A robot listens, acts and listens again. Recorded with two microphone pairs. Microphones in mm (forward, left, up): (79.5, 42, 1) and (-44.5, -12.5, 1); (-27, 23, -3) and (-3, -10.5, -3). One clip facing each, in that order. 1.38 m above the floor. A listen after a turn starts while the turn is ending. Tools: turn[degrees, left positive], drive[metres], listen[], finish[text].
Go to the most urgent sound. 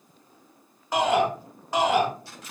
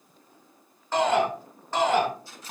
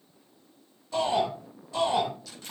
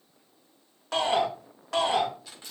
Thought: The shout: 55° right.
Action: turn[-55]
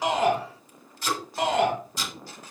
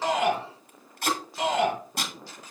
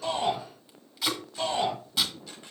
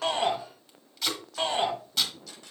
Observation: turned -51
Action: drive[1.0]
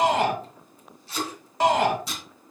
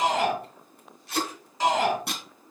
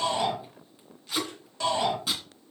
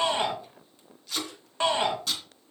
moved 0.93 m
Action: drive[1.0]
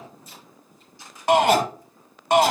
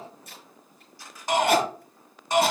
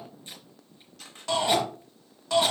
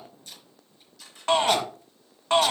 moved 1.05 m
Action: drive[1.0]
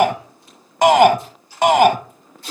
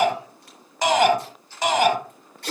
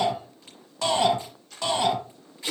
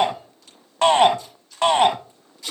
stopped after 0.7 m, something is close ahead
Action: finish[Arrived at the shout, straight ahead.]